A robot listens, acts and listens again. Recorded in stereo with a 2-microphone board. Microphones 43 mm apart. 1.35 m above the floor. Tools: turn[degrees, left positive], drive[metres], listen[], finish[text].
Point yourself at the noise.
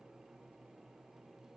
Action: listen[]
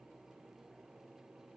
Action: listen[]
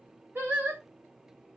Thought: The singing: about 65° right or 115° right.
Action: turn[-65]
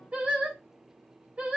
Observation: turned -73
Thought: So it is at 35° right.
Action: turn[-35]
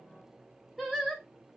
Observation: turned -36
Action: finish[Facing the singing, 1 to 2 m away.]